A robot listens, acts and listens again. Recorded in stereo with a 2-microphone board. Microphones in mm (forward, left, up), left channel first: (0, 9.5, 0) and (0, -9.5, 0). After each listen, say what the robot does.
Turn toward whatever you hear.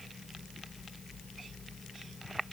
Keep listening.
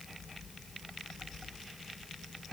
Keep listening.
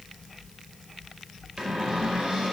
Turn 70° right.
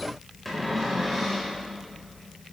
Facing the cupboard door, over 4 m away.